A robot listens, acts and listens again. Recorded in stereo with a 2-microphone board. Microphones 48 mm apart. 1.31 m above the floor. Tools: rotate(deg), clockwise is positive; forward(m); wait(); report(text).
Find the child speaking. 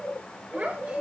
rotate(35)
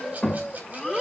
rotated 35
report("Found it: a child speaking, straight ahead.")